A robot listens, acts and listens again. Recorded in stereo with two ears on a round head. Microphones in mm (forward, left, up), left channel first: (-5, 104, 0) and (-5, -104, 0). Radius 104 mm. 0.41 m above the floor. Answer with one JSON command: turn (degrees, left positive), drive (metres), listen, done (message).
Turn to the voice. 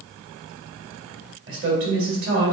{"turn": -55}
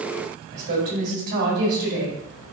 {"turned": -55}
{"turn": -55}
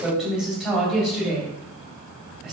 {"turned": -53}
{"done": "Facing the woman speaking."}